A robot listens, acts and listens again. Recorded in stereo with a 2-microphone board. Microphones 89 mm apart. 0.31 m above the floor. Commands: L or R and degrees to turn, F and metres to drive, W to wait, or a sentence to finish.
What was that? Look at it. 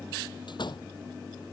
L60
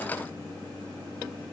W
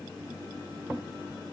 I heard a door slam, but can't make it out now. It was about straight ahead or 60° left.